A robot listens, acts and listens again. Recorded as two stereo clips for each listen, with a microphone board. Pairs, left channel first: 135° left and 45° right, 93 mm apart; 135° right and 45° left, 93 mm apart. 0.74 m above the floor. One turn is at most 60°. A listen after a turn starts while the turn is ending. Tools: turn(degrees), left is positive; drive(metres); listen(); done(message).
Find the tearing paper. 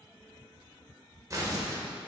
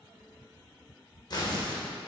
turn(degrees=-60)
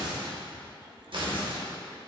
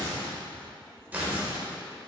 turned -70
turn(degrees=-25)
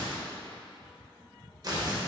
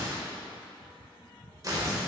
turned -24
done("Found it: tearing paper, straight ahead.")